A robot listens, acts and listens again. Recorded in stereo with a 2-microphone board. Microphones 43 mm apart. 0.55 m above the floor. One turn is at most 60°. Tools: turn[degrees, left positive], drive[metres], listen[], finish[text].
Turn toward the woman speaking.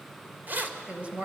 Thought: The woman speaking: about 30° right or 150° right.
Action: turn[-30]
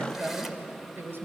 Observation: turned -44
Thought: So it is at 120° right.
Action: turn[-60]
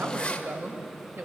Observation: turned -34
Thought: The woman speaking is now 70° right.
Action: turn[-60]
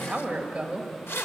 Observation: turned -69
Thought: The woman speaking is now 25° right.
Action: turn[-25]
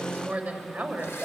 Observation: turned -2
Thought: The woman speaking is now 30° right.
Action: turn[-30]
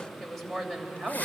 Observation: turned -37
Action: finish[Found it: a woman speaking, straight ahead.]